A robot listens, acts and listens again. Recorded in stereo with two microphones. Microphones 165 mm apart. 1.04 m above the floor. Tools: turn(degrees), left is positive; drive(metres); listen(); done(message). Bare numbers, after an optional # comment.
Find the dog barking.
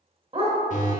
# The dog barking: about 35° right or 145° right.
turn(-35)
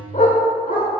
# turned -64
# So it is at 55° left.
turn(55)
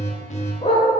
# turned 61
# The dog barking is now 40° left.
turn(40)
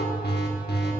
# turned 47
listen()
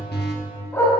# The dog barking is now 15° left.
turn(15)
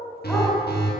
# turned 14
listen()
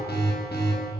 listen()
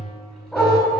done("Facing the dog barking.")